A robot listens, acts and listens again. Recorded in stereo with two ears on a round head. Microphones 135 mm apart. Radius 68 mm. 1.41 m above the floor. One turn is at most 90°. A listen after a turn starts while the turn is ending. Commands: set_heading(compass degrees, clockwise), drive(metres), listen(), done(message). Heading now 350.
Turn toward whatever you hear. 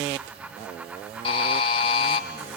set_heading(310)
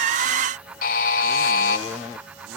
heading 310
set_heading(220)
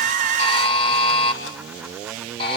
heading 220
set_heading(180)
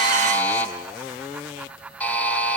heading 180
set_heading(170)
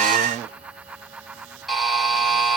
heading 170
done("Found it: a buzzer, straight ahead, 1 to 2 m away.")